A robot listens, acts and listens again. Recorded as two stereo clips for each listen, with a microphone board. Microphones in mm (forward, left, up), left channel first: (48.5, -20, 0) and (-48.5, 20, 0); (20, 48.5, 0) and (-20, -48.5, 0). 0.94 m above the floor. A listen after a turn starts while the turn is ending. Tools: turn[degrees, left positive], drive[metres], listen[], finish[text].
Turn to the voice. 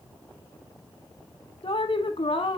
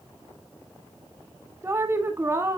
Thought: The woman speaking: 50° right.
Action: turn[-50]
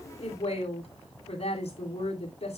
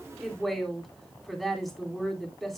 Thought: The woman speaking is now 25° right.
Action: turn[-25]
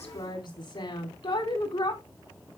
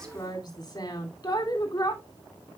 Thought: The woman speaking is now 15° left.
Action: turn[15]
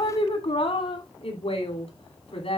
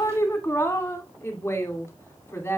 Action: finish[Facing the woman speaking.]